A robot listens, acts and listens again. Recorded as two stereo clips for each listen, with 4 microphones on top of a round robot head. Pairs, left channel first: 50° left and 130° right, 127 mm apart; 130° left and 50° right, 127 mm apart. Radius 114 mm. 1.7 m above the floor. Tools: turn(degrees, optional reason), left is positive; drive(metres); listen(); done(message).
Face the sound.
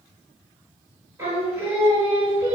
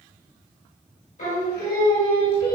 turn(degrees=160, reason="The singing: 160° left.")
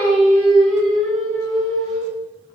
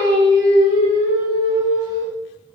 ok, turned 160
turn(degrees=-35, reason="The singing is now 35° right.")
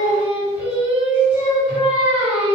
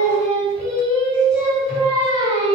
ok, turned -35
done("Found it: singing, straight ahead.")